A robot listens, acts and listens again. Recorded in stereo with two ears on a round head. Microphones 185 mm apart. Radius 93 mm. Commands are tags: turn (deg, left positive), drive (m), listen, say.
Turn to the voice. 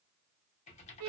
<listen/>
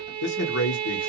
<turn deg="60"/>
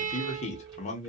<turn deg="40"/>
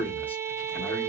<turn deg="10"/>
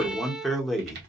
<say>Found it: a man speaking, straight ahead.</say>